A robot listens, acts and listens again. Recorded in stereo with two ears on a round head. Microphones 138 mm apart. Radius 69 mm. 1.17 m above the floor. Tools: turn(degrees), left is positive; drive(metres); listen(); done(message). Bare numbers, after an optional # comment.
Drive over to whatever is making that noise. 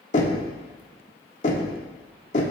# The knocking: about 50° left or 130° left.
turn(50)
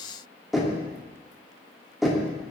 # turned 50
drive(1.0)
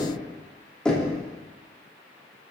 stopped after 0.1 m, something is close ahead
done("Something is in my way. I am facing the knocking but have not reached it.")